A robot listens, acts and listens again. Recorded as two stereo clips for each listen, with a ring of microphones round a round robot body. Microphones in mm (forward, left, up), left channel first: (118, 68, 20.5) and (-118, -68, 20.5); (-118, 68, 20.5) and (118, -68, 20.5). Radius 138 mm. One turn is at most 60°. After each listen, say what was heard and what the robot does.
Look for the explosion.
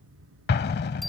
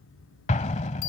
The explosion: 85° left. Turn 60° left.
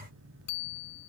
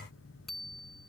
Nothing new. It was at 25° left. Turn 25° left.
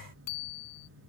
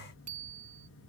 Facing where the explosion came from. I can't hear it now.